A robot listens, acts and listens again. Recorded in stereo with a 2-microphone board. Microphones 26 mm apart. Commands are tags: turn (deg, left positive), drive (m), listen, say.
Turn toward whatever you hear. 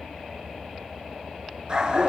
<turn deg="-35"/>
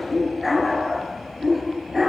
<turn deg="-10"/>
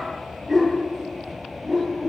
<turn deg="-10"/>
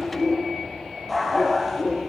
<say>Found it: a dog barking, straight ahead, over 4 m away.</say>